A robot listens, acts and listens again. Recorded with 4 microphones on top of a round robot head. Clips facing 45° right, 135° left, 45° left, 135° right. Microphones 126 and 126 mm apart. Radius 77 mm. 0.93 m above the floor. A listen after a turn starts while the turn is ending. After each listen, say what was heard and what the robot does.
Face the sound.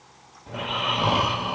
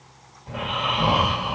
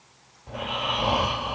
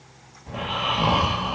The snoring: 90° right. Turn 90° right.
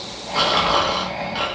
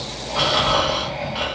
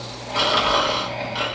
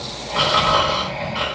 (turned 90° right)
Facing the snoring.